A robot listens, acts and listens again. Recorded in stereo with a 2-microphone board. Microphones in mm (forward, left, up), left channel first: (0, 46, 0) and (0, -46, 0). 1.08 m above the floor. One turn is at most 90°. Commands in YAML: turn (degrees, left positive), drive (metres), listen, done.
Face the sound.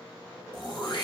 turn: 50
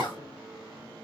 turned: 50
turn: 65
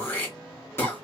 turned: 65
turn: 30
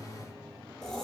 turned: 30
done: "Facing the throat clearing, 1 to 2 m away."